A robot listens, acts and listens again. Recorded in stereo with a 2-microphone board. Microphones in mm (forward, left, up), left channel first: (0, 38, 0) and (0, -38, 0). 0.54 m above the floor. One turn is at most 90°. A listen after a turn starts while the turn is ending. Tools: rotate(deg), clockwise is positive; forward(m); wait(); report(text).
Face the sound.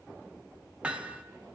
rotate(15)
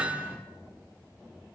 wait()
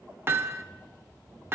rotate(90)
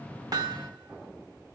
rotate(60)
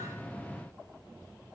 wait()
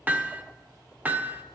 rotate(25)
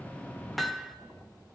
report("Found it: hammering, straight ahead.")